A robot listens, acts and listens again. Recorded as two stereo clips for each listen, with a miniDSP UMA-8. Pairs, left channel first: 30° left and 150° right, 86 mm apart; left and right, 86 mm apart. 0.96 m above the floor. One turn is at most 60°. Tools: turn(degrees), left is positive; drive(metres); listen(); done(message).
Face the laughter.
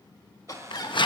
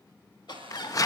turn(degrees=60)
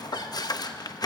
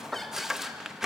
done("Facing the laughter.")